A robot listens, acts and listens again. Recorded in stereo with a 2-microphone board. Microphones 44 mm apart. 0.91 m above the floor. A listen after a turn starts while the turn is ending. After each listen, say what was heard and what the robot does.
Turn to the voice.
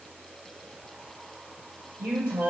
The woman speaking: about 75° right or 105° right. Turn 75° right.
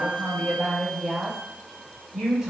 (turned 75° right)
So it is at 10° right. Turn 10° right.
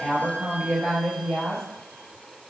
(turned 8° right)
Found it: a woman speaking, straight ahead, 1 to 2 m away.